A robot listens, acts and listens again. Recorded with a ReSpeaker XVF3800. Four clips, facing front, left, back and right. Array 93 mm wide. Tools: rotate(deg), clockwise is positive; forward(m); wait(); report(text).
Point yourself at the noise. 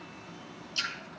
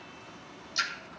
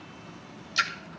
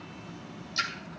rotate(-175)
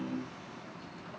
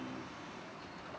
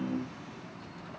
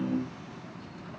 report("Facing where the splash came from. I can't hear it now.")